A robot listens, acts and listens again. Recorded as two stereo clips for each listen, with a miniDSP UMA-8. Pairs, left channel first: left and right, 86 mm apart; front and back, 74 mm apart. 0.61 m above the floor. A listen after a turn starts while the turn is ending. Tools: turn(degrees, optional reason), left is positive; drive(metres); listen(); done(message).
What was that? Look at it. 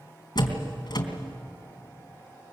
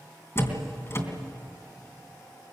turn(degrees=55, reason="The door slam: 55° left.")
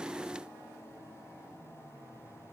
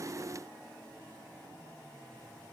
done("I heard a door slam from this way, but can't make it out now.")